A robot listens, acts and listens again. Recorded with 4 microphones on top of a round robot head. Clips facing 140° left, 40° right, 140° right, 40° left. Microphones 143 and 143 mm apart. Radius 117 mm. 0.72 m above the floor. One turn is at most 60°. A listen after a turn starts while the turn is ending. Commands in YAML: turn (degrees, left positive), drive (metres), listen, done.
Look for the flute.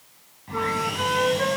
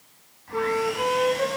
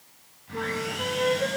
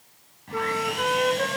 turn: 25
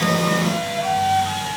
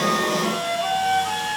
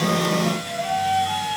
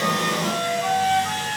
done: "Facing the flute."